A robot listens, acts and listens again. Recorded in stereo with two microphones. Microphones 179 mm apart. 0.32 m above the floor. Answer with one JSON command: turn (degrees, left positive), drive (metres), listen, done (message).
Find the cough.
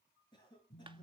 {"turn": 25}
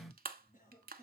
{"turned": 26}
{"turn": 125}
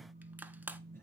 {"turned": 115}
{"turn": 10}
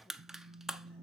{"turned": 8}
{"listen": true}
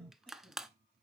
{"done": "Facing where the cough came from. I can't hear it now."}